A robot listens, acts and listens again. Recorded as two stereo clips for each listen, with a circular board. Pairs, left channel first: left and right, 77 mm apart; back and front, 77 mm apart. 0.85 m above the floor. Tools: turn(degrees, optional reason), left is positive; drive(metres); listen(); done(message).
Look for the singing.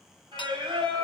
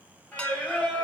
turn(degrees=-105, reason="The singing: 105° right.")
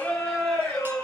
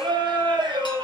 turn(degrees=20, reason="The singing is now 20° left.")
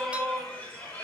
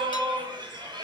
turn(degrees=20, reason="The singing is now 20° left.")
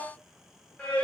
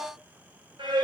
turn(degrees=15, reason="The singing is now 15° left.")
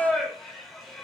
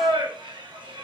done("Found it: singing, straight ahead.")